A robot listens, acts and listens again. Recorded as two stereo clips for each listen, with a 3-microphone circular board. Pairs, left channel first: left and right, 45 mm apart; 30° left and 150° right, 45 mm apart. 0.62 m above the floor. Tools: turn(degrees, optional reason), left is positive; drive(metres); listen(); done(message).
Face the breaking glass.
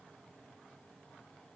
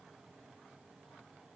listen()
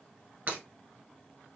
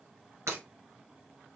turn(degrees=-150, reason="The breaking glass: 150° right.")
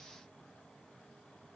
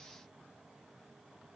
done("I heard breaking glass from this way, but can't make it out now.")